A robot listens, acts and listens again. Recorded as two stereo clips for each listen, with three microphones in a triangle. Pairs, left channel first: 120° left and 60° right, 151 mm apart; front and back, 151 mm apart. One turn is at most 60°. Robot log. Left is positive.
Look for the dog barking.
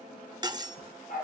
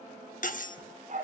note: The dog barking: 145° left.
cmd yaw +60
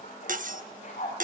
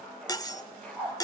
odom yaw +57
note: The dog barking is now 80° left.
cmd yaw +60
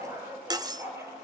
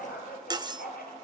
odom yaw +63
note: The dog barking is now 10° left.
cmd yaw +10
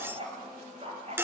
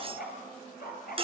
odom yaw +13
note: The dog barking is now 15° right.
cmd yaw -15
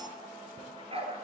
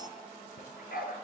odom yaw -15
note: The dog barking is now 10° right.
cmd yaw -10
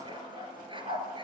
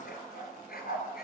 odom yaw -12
end: Found it: a dog barking, straight ahead, 2 to 4 m away.